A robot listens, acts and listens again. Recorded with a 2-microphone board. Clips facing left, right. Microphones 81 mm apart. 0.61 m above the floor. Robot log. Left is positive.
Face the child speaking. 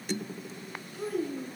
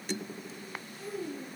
cmd yaw +90
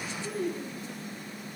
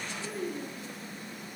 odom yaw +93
end: Found it: a child speaking, straight ahead.